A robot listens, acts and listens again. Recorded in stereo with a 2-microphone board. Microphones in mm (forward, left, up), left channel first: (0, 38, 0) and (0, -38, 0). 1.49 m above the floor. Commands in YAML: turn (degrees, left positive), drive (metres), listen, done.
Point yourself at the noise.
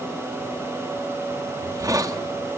turn: -50
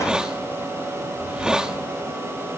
turn: -10
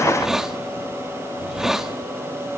turn: -10
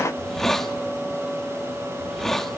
done: "Facing the hiss, 1 to 2 m away."